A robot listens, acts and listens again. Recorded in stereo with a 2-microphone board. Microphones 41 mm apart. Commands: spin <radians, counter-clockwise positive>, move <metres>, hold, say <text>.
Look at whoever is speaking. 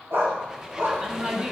spin -0.52
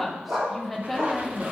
say Facing the woman speaking.